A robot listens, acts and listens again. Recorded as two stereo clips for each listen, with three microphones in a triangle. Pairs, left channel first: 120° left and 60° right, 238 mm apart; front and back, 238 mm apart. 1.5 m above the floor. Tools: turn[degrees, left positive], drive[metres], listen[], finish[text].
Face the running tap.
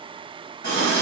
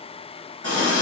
Thought: The running tap: 155° left.
Action: turn[155]
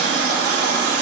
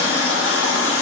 Thought: The running tap is now 15° right.
Action: turn[-15]
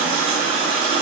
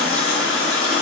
Action: finish[Facing the running tap, 1 to 2 m away.]